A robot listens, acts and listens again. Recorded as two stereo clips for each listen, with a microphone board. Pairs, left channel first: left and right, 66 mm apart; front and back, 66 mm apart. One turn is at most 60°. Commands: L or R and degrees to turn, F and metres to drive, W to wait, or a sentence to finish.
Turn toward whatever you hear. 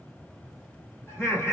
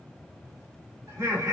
L60
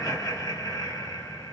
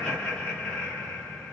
L60
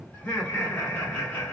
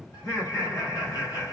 L25
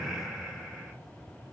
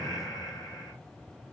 Found it: laughter, straight ahead.